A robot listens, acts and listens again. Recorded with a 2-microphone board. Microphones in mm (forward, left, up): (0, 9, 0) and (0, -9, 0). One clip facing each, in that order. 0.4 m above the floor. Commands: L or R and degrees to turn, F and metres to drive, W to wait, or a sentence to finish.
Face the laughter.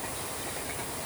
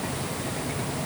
W
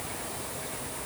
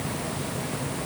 W
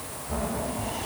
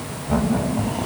R45
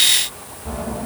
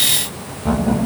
R80
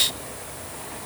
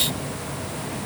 W
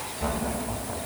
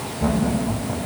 Found it: laughter, straight ahead.